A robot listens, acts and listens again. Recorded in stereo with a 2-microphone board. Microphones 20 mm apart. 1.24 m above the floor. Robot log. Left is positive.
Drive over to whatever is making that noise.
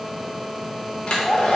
note: The hair dryer: about 65° left or 115° left.
cmd yaw +65
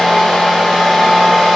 note: So it is at 55° left.
cmd yaw +55
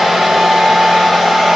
cmd fwd 1.0
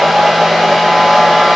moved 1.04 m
cmd fwd 1.0
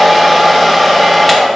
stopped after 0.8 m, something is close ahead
end: Arrived at the hair dryer, straight ahead.